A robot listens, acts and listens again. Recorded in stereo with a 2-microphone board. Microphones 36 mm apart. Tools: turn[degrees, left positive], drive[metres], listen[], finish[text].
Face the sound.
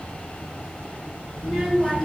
Action: turn[30]
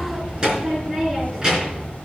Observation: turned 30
Thought: So it is at 20° right.
Action: turn[-20]
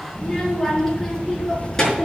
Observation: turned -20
Thought: The child speaking is now 15° left.
Action: turn[15]
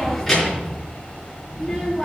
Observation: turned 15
Action: finish[Found it: a child speaking, straight ahead, over 4 m away.]